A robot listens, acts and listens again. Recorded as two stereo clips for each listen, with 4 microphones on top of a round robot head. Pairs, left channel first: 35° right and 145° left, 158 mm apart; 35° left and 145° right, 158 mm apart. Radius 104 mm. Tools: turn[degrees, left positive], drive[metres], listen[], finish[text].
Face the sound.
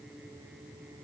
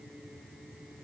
Action: listen[]
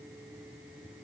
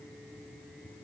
Action: listen[]
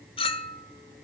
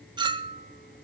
Thought: The clink: 85° right.
Action: turn[-85]
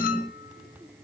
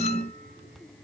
Action: listen[]
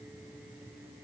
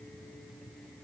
Action: listen[]
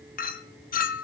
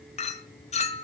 Thought: The clink is now 10° right.
Action: turn[-10]
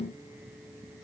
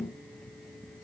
Action: listen[]
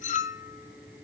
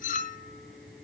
Action: finish[Found it: a clink, straight ahead, 1 to 2 m away.]